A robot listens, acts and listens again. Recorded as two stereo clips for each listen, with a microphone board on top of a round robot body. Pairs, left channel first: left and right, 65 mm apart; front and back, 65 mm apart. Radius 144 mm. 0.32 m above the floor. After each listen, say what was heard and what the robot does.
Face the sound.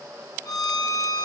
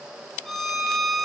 The violin: 90° left. Turn 90° left.
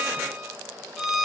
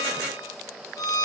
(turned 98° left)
Facing the violin, 2 to 4 m away.